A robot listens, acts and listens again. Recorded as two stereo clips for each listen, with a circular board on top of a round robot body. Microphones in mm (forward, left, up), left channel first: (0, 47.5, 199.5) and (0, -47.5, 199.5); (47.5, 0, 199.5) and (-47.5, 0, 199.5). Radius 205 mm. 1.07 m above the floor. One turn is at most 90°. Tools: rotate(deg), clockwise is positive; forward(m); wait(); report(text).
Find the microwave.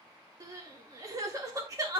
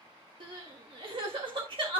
wait()
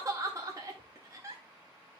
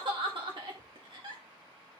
wait()
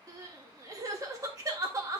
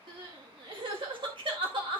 report("I can't make out a microwave, only crying.")